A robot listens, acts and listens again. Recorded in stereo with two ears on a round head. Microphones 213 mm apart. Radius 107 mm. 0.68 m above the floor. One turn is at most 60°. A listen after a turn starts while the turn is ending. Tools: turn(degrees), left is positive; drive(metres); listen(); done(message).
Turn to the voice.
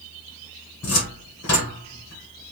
listen()
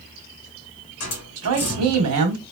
turn(degrees=-60)
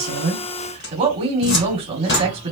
turn(degrees=-25)
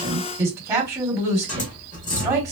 turn(degrees=-10)
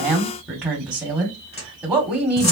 done("Found it: a woman speaking, straight ahead, 1 to 2 m away.")